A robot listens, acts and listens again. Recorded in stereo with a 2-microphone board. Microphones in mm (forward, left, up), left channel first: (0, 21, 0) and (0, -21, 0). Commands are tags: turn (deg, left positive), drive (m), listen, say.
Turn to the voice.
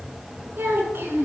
<turn deg="-65"/>
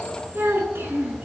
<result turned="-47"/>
<turn deg="-70"/>
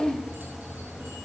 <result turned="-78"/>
<turn deg="10"/>
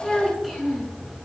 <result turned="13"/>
<say>Facing the child speaking.</say>